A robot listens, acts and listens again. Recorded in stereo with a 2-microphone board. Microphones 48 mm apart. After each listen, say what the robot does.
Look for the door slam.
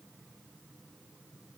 Keep listening.
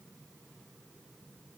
Keep listening.
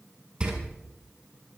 Turn 20° right.
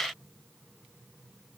Keep listening.
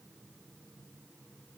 I heard a door slam, but can't make it out now. It was about straight ahead or 140° right.